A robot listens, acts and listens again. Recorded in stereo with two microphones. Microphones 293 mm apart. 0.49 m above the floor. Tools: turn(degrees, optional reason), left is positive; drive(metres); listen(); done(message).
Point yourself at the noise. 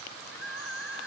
turn(degrees=50, reason="The crying: about 50° left or 130° left.")
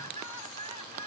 turn(degrees=80, reason="So it is at 80° left.")
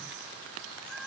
done("Facing the crying.")